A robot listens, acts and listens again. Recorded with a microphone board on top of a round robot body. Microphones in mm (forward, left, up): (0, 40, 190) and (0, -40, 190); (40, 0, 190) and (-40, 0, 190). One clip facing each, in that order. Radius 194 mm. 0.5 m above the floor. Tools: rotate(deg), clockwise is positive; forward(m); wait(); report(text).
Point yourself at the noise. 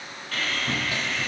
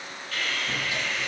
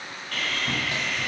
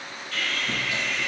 rotate(-40)
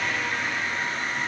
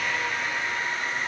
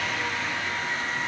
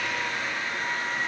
report("Facing the sawing.")